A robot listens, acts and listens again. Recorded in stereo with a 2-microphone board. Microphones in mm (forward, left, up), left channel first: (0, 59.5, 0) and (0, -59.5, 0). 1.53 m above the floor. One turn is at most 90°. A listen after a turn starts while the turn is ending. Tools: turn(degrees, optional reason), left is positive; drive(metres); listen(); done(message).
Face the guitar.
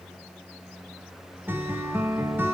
turn(degrees=-15, reason="The guitar: about 15° right or 165° right.")
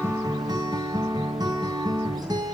turn(degrees=-90, reason="So it is at 145° right.")
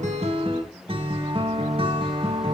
turn(degrees=-50, reason="The guitar is now 50° right.")
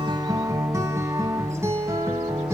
turn(degrees=-25, reason="The guitar is now 25° right.")
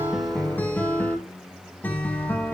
turn(degrees=15, reason="The guitar is now 15° left.")
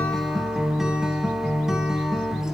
done("Found it: a guitar, straight ahead.")